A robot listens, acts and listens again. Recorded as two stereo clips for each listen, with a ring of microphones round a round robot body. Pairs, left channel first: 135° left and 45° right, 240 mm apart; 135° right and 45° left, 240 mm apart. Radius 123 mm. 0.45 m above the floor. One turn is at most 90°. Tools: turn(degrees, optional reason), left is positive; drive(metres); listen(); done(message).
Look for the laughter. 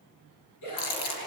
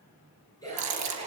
turn(degrees=90, reason="The laughter: 150° left.")
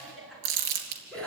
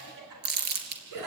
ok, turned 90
turn(degrees=50, reason="The laughter is now 50° left.")
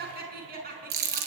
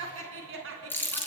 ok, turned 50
turn(degrees=10, reason="The laughter is now 10° left.")
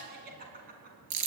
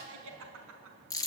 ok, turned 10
turn(degrees=10, reason="The laughter is now 10° left.")
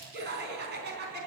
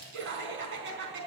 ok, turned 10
done("Found it: laughter, straight ahead, over 4 m away.")